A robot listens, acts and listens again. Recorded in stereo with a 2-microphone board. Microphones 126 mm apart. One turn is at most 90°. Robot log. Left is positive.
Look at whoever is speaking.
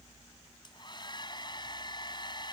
cmd idle
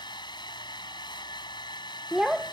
cmd yaw -30
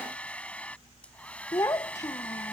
note: So it is at 25° left.
cmd yaw +25
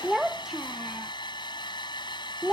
end: Found it: a child speaking, straight ahead.